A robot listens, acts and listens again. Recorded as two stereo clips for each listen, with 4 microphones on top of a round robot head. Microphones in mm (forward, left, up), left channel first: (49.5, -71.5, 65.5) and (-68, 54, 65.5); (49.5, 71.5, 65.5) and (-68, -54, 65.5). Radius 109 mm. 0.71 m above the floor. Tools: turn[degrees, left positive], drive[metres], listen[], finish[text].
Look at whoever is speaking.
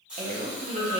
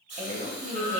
Thought: The woman speaking: straight behind.
Action: turn[180]
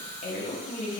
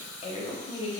Action: finish[Found it: a woman speaking, straight ahead.]